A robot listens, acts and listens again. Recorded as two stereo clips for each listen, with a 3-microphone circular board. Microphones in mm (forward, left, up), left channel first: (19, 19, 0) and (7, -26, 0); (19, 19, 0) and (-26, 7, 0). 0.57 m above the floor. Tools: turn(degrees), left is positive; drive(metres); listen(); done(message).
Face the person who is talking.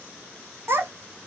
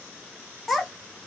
turn(degrees=-75)
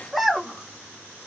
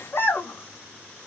turn(degrees=-15)
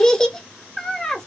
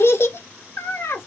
done("Facing the child speaking, under 1 m away.")